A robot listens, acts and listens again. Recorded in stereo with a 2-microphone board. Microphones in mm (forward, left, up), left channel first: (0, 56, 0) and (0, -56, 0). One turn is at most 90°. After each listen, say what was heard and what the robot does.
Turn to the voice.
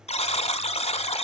Keep listening.
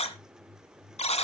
Keep listening.
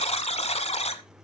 I can't make out anyone speaking, only a buzzer.